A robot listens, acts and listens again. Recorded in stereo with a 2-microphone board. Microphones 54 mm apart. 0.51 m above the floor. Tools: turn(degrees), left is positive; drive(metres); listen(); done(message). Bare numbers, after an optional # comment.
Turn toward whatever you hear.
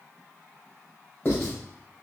# The writing: about 40° left or 140° left.
turn(40)
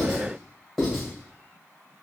done("Facing the writing, 1 to 2 m away.")